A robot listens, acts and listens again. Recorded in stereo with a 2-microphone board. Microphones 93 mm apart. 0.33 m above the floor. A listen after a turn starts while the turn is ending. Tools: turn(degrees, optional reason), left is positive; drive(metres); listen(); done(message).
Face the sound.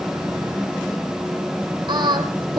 turn(degrees=-45, reason="The singing: about 45° right or 135° right.")
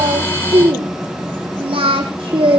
turn(degrees=-80, reason="So it is at 80° right.")
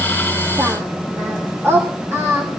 turn(degrees=-30, reason="The singing is now 30° right.")
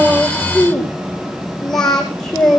done("Found it: singing, straight ahead, over 4 m away.")